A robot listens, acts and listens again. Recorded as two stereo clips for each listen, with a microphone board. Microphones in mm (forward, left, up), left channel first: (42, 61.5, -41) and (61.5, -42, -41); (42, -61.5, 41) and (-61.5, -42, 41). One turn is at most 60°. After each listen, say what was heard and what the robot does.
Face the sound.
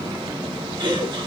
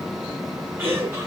The laughter: 125° right. Turn 60° right.
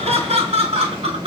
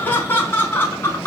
The laughter is now 80° right. Turn 60° right.
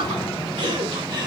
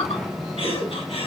The laughter is now 35° right. Turn 35° right.
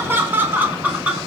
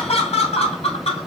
Found it: laughter, straight ahead, 2 to 4 m away.